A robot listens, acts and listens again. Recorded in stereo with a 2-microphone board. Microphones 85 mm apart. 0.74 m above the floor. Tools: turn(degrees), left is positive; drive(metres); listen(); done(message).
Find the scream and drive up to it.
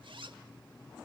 listen()
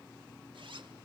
listen()
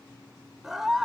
turn(degrees=-30)
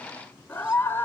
turn(degrees=25)
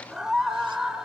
turn(degrees=-10)
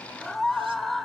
drive(metres=1.0)
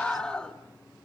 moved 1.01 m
turn(degrees=10)
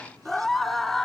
drive(metres=1.0)
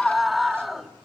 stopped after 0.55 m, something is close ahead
done("Arrived at the scream, straight ahead.")